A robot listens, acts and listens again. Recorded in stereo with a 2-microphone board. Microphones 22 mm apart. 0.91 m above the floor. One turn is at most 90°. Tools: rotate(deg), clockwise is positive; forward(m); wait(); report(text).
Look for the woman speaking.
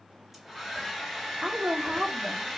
rotate(40)
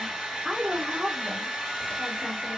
rotate(45)
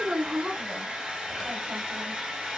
rotate(90)
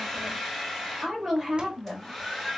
report("Found it: a woman speaking, straight ahead.")